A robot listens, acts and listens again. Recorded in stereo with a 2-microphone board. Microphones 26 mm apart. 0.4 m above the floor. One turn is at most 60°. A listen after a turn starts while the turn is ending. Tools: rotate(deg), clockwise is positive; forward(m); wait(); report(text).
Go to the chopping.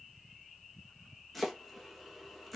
rotate(-30)
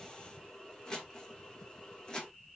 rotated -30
rotate(-60)
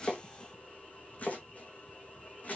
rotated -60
rotate(-60)
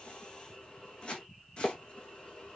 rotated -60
rotate(-45)
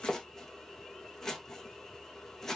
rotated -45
rotate(-20)
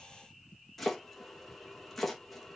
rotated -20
forward(1.0)
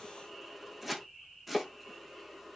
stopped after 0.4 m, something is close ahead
report("Something is in my way. I am facing the chopping but have not reached it.")